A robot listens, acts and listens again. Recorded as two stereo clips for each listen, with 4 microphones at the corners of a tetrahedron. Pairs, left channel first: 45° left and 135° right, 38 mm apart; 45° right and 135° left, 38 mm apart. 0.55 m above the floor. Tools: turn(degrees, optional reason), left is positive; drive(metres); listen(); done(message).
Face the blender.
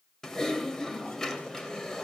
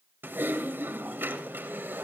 listen()
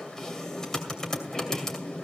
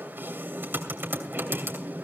listen()
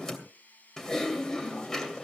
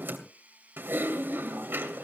turn(degrees=85, reason="The blender: 85° left.")
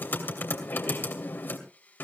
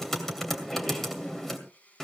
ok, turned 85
done("Found it: a blender, straight ahead, 2 to 4 m away.")